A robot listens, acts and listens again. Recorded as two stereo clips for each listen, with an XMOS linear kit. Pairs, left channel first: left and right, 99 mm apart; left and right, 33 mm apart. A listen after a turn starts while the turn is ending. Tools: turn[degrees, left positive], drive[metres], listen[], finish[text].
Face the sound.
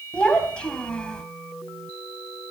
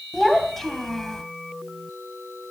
Action: turn[30]
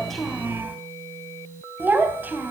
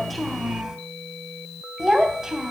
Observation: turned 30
Thought: So it is at 20° right.
Action: turn[-20]
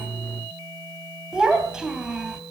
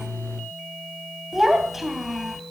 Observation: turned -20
Action: finish[Found it: a child speaking, straight ahead.]